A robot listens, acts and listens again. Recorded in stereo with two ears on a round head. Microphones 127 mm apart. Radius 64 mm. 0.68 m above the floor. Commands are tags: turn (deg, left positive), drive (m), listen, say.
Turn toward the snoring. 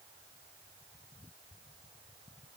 <listen/>
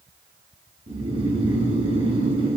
<turn deg="-40"/>
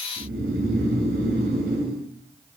<turn deg="-100"/>
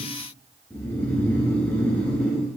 <turn deg="10"/>
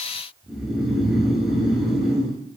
<say>Found it: snoring, straight ahead.</say>